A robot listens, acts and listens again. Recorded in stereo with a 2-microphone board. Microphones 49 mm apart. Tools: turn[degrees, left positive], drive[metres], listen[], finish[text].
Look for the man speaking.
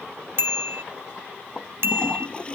Action: listen[]
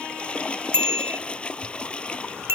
Action: listen[]
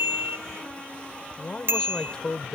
Thought: The man speaking: about 20° left or 160° left.
Action: turn[20]
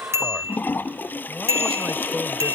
Action: finish[Found it: a man speaking, straight ahead.]